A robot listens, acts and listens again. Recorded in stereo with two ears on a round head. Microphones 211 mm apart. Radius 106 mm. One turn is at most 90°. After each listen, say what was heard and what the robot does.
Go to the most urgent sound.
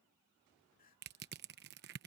The crying: about 35° left or 145° left. Turn 35° left.
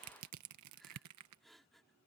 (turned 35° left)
Drive 1.0 m forward.
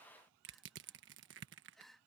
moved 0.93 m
Drive 1.0 m forward.
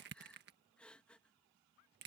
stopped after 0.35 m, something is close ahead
Arrived at the crying, straight ahead.